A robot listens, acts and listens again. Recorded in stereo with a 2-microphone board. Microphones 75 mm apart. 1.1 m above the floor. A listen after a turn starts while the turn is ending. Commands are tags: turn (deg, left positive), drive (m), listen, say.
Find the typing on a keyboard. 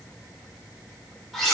<listen/>
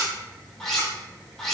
<listen/>
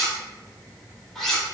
<say>I can't make out typing on a keyboard, only cutlery clinking.</say>